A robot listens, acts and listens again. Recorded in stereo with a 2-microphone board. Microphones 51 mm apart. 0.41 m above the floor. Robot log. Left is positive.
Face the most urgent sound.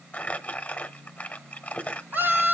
note: The scream: about 50° right or 130° right.
cmd yaw -50
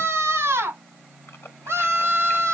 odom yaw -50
note: So it is at 75° right.
cmd yaw -75
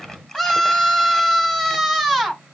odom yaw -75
end: Found it: a scream, straight ahead, 2 to 4 m away.